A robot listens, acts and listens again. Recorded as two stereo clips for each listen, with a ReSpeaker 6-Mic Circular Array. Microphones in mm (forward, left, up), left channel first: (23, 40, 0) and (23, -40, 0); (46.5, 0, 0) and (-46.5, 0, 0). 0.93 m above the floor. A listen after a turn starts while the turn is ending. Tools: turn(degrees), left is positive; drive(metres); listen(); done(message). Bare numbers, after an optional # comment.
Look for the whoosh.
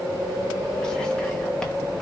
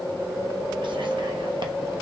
listen()
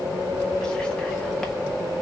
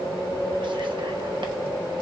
listen()
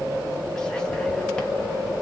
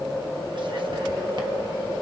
done("I can't make out a whoosh.")